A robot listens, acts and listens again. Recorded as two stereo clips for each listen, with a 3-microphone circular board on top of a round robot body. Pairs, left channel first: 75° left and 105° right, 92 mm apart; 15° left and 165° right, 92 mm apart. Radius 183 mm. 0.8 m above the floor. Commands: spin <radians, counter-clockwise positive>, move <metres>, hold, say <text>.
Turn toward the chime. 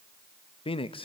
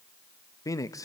hold
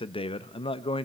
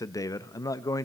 hold
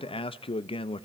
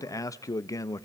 say I can't make out a chime to turn to.